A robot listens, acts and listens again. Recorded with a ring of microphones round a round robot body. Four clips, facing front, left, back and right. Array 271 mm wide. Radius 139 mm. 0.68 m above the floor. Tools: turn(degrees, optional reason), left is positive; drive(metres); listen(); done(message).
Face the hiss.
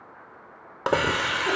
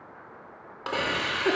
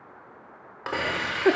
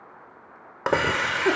turn(degrees=-45, reason="The hiss: 45° right.")
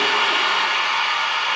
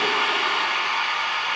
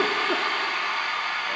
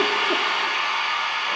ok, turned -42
done("Found it: a hiss, straight ahead, under 1 m away.")